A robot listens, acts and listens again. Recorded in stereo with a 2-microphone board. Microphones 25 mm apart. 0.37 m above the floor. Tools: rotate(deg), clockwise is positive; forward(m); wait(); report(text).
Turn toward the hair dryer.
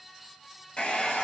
rotate(-45)
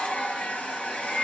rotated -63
rotate(-70)
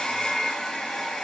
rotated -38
rotate(-30)
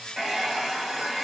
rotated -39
rotate(10)
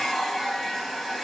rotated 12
report("Facing the hair dryer, 1 to 2 m away.")